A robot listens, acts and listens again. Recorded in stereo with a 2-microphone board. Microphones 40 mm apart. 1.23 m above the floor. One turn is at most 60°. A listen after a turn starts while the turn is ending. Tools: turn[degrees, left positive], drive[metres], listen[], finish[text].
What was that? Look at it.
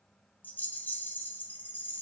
Thought: The rattle: about 50° left or 130° left.
Action: turn[50]
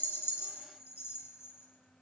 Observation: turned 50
Thought: So it is at 80° left.
Action: turn[60]
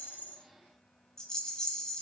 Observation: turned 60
Thought: The rattle is now 15° left.
Action: turn[15]
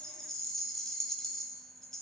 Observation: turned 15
Action: finish[Facing the rattle.]